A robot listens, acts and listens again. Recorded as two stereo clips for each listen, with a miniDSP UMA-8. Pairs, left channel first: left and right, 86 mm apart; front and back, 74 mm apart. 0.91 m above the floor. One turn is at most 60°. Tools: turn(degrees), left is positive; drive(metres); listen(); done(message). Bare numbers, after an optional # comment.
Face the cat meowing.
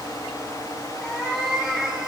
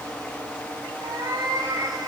# The cat meowing: 175° right.
turn(-60)
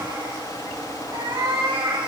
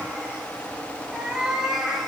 # The cat meowing is now 95° right.
turn(-60)
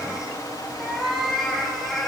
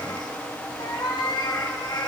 done("Found it: a cat meowing, straight ahead.")